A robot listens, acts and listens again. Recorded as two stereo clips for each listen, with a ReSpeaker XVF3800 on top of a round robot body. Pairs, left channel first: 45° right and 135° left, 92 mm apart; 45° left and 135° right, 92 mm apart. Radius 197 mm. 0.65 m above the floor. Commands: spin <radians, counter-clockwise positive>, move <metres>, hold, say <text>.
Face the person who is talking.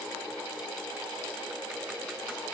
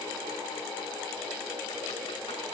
hold
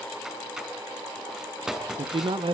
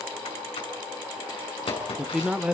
spin 2.53
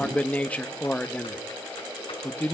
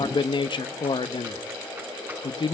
spin 0.52
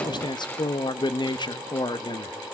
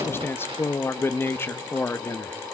spin -0.26
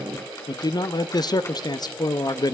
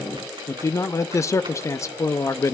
spin -0.17
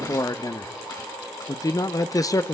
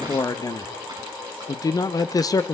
say Found it: a man speaking, straight ahead, 1 to 2 m away.